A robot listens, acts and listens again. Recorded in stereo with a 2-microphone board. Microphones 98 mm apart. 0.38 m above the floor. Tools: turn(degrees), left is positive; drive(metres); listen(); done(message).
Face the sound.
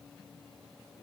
listen()
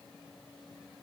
listen()
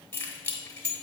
turn(degrees=25)
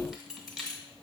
done("Found it: keys jangling, straight ahead, 1 to 2 m away.")